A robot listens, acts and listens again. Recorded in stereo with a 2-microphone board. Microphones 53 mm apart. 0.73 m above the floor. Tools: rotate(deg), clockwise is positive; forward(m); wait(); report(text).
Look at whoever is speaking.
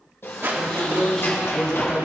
rotate(-30)
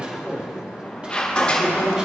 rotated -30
rotate(20)
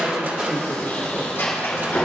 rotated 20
report("Found it: a man speaking, straight ahead.")